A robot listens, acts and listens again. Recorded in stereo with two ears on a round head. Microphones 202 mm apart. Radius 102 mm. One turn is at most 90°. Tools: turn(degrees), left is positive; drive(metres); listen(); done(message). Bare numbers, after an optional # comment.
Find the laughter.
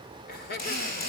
# The laughter: about 45° left or 135° left.
turn(45)
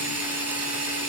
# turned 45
listen()
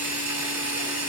listen()
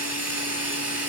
done("I heard laughter, but can't make it out now. It was about straight ahead or 90° left.")